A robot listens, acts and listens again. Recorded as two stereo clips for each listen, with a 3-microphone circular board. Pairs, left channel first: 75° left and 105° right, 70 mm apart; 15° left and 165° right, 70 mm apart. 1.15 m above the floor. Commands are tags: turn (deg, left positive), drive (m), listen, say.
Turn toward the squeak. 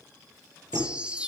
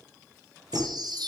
<turn deg="-145"/>
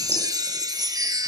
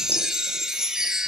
<listen/>
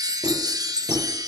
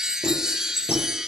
<turn deg="-50"/>
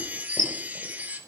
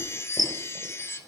<say>Found it: a squeak, straight ahead.</say>